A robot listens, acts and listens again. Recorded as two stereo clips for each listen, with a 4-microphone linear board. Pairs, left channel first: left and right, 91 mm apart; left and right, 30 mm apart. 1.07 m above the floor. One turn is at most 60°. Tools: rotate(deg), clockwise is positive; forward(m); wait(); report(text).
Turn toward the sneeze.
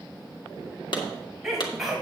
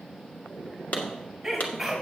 rotate(30)
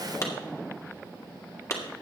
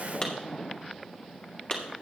wait()
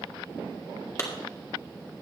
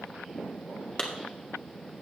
report("I heard a sneeze, but can't make it out now. It was about 25° left or 145° right.")